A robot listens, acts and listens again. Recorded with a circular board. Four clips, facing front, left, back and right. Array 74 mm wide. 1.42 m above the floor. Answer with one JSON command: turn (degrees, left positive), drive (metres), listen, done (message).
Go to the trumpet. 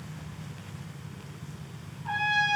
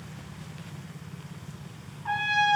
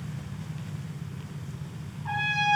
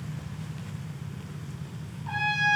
{"turn": 100}
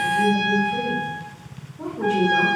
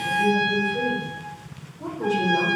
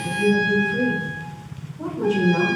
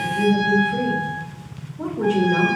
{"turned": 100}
{"drive": 1.0}
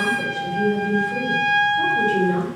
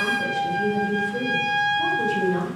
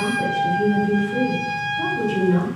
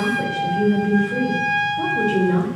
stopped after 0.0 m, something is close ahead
{"done": "Something is in my way. I am facing the trumpet but have not reached it."}